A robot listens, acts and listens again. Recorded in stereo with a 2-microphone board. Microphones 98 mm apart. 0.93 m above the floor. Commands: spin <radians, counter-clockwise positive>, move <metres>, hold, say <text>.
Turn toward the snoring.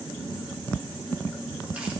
hold
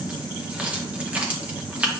hold
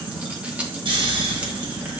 spin -1.13
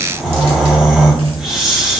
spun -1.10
say Facing the snoring, 2 to 4 m away.